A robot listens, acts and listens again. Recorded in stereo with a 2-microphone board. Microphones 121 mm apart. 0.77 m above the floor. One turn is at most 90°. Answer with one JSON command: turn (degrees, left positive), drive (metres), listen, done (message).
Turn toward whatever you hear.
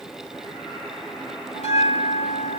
{"turn": 60}
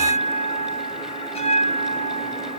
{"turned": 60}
{"turn": 60}
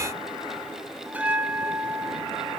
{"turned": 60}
{"turn": -10}
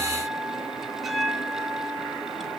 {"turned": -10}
{"done": "Found it: a bell, straight ahead, 1 to 2 m away."}